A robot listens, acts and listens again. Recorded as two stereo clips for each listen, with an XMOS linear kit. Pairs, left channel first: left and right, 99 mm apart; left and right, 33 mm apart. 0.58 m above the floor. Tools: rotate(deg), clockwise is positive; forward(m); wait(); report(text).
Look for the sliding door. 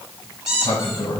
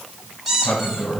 rotate(-50)
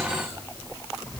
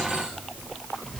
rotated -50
report("Found it: a sliding door, straight ahead, 1 to 2 m away.")